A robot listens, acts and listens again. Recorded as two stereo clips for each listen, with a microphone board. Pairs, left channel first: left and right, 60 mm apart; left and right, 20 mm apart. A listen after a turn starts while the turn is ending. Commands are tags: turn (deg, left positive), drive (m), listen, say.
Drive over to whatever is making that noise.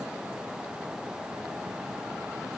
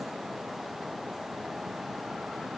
<listen/>
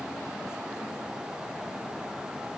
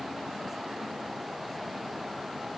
<listen/>
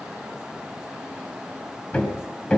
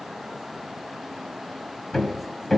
<turn deg="15"/>
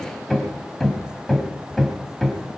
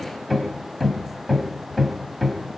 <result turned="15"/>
<drive m="1.0"/>
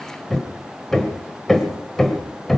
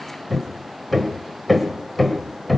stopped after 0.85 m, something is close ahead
<turn deg="10"/>
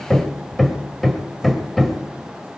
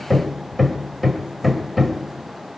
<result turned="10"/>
<say>I am next to the hammering.</say>